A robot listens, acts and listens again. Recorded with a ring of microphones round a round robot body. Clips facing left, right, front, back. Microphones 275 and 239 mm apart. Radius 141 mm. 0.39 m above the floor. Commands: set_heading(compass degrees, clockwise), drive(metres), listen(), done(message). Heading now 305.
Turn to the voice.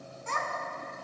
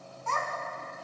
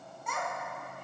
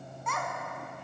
set_heading(145)
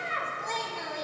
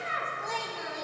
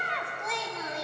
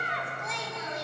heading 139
done("Facing the child speaking, 2 to 4 m away.")